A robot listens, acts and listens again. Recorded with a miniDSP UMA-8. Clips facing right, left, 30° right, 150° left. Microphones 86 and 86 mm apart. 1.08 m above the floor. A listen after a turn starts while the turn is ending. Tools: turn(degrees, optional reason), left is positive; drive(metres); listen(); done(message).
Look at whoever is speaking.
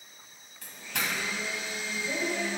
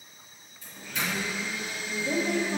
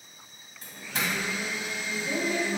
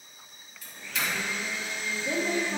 turn(degrees=100, reason="The woman speaking: 100° left.")
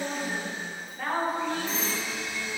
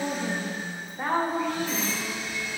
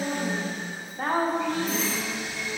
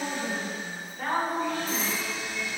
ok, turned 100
turn(degrees=20, reason="The woman speaking is now 20° left.")
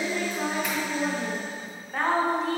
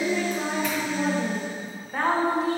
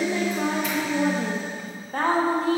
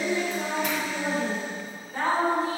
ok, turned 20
done("Facing the woman speaking.")